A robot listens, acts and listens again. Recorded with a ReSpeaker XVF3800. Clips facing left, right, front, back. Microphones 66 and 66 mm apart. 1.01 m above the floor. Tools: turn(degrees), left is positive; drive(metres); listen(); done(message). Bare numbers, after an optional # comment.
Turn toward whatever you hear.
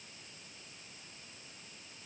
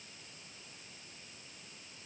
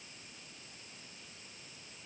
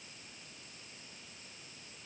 listen()
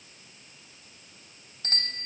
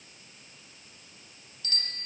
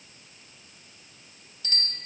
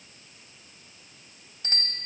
# The bicycle bell: 135° left.
turn(135)
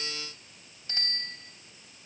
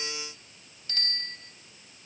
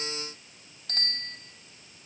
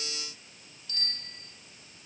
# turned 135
# The bicycle bell is now 25° left.
turn(25)
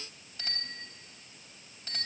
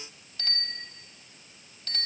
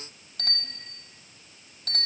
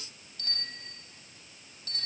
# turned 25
# The bicycle bell is now 15° left.
turn(15)
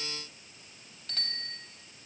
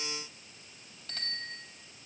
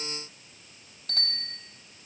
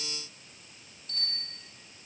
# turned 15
done("Found it: a bicycle bell, straight ahead.")